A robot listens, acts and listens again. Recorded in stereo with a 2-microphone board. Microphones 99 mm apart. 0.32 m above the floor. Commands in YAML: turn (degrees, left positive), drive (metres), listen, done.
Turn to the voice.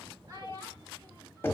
turn: -40
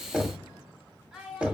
turn: -10
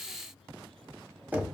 listen: true
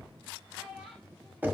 done: "Found it: a child speaking, straight ahead, 1 to 2 m away."